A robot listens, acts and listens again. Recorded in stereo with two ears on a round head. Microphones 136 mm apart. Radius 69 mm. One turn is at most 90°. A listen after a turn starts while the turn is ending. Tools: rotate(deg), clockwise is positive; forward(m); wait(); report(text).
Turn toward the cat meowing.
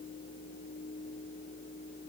wait()
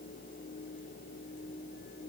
wait()
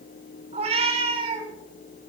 rotate(40)
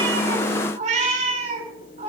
rotate(90)
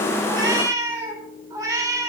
rotate(25)
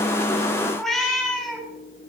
report("Facing the cat meowing.")